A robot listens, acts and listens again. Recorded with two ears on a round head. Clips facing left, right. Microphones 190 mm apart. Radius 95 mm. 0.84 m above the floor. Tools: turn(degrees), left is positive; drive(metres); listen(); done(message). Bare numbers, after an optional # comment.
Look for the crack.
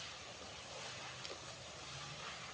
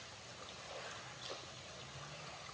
listen()
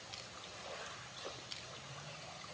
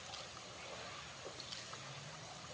listen()
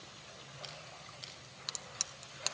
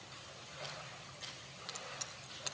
# The crack: about 60° left or 120° left.
turn(60)
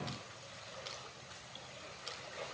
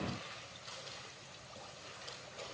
listen()
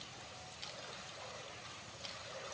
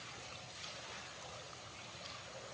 done("I heard a crack, but can't make it out now. It was about straight ahead or 60° left.")